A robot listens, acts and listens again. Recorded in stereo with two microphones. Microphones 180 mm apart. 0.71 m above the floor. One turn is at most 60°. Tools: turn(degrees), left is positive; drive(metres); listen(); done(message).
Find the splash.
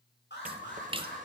turn(degrees=-30)
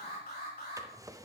listen()
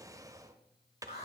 done("I heard a splash, but can't make it out now. It was about straight ahead or 120° right.")